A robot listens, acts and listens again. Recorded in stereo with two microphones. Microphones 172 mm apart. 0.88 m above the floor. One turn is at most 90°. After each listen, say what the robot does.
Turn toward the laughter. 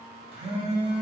Keep listening.
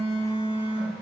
Keep listening.
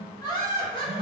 Turn 25° left.
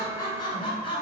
Turn 30° left.
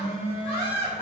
Turn 35° left.
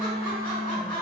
Turn 25° left.
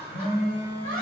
Turn 10° left.
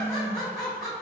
Facing the laughter, 1 to 2 m away.